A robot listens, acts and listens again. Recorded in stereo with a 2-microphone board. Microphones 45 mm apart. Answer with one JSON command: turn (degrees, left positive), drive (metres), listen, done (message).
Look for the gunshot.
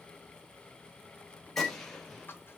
{"turn": 30}
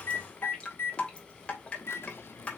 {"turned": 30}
{"listen": true}
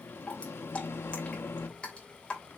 {"done": "I heard a gunshot, but can't make it out now. It was about 25° right or 145° left."}